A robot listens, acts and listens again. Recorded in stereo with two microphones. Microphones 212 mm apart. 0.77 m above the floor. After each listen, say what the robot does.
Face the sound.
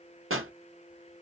Turn 90° right.
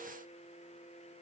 Facing where the pop came from. I can't hear it now.